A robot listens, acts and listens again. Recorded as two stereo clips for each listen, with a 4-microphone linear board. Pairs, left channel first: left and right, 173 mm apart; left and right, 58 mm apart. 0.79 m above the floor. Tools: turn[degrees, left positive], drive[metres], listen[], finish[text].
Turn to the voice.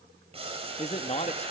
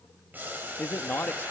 Thought: The man speaking: about 40° left or 140° left.
Action: turn[40]
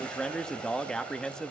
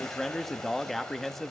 Action: finish[Found it: a man speaking, straight ahead.]